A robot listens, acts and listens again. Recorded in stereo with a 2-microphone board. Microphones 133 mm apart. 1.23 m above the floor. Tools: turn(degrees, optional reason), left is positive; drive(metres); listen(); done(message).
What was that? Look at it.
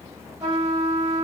turn(degrees=-30, reason="The trumpet: about 30° right or 150° right.")
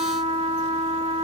turn(degrees=-115, reason="So it is at 115° right.")
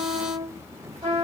turn(degrees=-45, reason="The trumpet is now 45° right.")
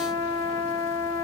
turn(degrees=20, reason="The trumpet is now 20° left.")
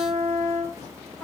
done("Facing the trumpet.")